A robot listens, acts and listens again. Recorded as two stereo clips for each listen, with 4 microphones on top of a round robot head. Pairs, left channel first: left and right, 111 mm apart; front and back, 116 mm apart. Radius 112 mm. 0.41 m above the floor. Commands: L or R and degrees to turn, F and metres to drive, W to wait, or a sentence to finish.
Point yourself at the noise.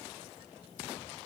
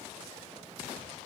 W
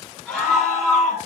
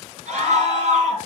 L175
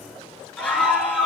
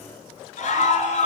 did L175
L10
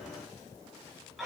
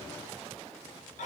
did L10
Found it: a scream, straight ahead, over 4 m away.